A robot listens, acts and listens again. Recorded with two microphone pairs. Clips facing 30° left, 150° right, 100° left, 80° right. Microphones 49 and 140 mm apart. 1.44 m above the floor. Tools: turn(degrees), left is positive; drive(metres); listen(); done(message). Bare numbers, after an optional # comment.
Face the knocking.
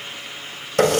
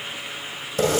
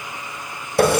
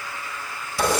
listen()
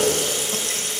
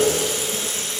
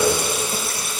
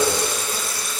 listen()
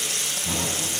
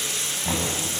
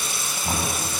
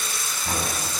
# The knocking: 170° left.
turn(170)
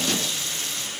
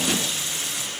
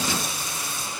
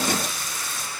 listen()
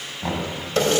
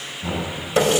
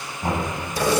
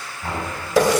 # The knocking is now 30° left.
turn(30)
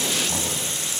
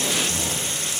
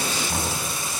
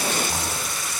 listen()
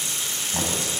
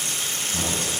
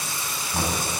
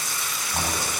done("Facing the knocking.")